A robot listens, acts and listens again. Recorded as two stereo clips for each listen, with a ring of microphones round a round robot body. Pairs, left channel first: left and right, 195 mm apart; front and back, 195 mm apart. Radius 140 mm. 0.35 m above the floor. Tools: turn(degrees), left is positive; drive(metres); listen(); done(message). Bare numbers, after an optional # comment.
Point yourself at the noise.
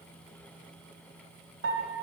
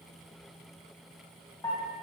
# The piano: 75° right.
turn(-75)
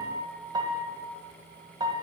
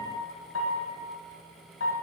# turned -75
# The piano is now 20° right.
turn(-20)
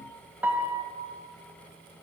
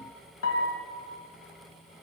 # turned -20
# The piano is now 10° right.
turn(-10)
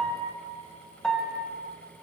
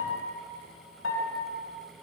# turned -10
done("Facing the piano.")